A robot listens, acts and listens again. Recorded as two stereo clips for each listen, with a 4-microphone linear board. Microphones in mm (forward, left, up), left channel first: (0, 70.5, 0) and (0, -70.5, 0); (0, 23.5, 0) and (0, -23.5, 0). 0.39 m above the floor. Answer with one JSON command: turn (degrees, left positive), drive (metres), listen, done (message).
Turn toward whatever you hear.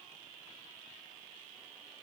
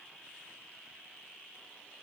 {"listen": true}
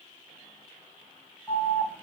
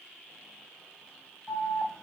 {"turn": 30}
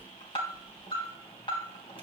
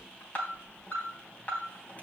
{"turn": 135}
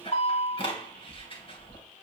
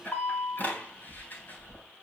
{"turn": 45}
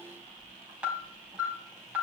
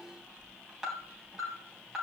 {"turn": -10}
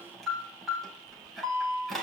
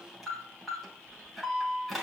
{"done": "Facing the alarm, 2 to 4 m away."}